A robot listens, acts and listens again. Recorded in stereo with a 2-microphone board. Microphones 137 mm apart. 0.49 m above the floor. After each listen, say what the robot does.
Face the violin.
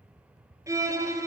Turn 25° right.
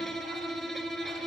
Facing the violin, 1 to 2 m away.